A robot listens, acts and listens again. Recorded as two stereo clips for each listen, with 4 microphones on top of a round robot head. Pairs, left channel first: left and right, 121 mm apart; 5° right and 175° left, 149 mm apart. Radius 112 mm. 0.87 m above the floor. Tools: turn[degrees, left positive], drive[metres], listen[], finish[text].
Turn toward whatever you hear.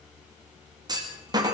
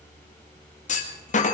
Thought: The clunk: 35° right.
Action: turn[-35]
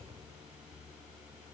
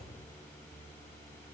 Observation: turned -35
Action: finish[Facing where the clunk came from. I can't hear it now.]